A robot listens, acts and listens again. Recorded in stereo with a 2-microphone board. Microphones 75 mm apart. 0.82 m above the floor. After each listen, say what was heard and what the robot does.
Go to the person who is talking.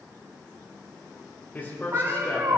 The man speaking: about 25° left or 155° left. Turn 25° left.
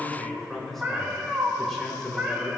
Drive 1.0 m forward.
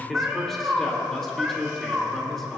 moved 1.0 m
Drive 1.0 m forward.
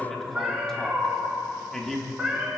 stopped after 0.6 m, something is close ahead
The man speaking is now 10° left. Turn 10° left.
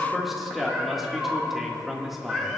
I am next to the man speaking.